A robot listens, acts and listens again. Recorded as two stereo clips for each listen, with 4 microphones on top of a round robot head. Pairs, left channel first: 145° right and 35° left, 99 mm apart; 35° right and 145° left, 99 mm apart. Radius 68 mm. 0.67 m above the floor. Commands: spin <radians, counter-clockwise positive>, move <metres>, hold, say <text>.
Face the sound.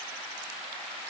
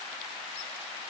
hold
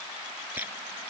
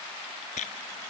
spin -0.70
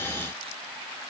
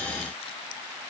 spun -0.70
hold
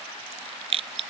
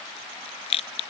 say Facing the rattle.